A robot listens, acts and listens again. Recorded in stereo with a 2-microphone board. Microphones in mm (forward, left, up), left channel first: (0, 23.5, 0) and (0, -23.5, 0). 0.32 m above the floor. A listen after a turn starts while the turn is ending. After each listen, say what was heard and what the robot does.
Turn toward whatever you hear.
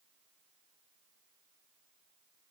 Keep listening.
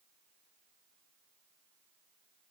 Keep listening.
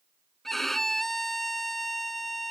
Turn 30° left.
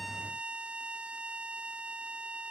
So it is at 25° right. Turn 25° right.
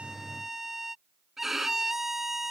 The violin is now 10° right. Turn 10° right.
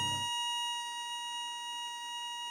Facing the violin.